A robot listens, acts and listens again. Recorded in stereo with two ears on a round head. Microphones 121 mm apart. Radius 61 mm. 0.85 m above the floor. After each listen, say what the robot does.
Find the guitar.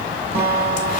Turn 40° right.
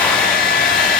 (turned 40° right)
Keep listening.
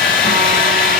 Keep listening.
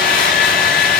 I heard a guitar, but can't make it out now. It was about straight ahead or 100° right.